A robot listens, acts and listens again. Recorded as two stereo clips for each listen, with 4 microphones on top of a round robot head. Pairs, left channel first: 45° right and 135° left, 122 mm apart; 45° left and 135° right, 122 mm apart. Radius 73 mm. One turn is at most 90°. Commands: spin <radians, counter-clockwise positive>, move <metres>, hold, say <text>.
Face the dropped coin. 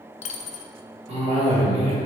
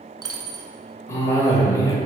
spin -1.31
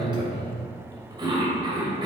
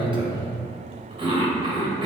say I heard a dropped coin from this way, but can't make it out now.